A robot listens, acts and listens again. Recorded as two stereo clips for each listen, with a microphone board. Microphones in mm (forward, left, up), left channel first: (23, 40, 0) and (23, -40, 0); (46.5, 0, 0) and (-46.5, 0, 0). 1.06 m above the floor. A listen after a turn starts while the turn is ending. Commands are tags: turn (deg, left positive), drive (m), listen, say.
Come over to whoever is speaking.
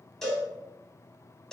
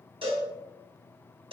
<listen/>
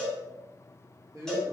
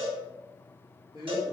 <turn deg="-140"/>
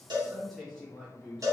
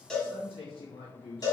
<drive m="1.0"/>
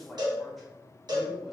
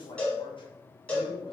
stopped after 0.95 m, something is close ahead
<say>I am next to the man speaking.</say>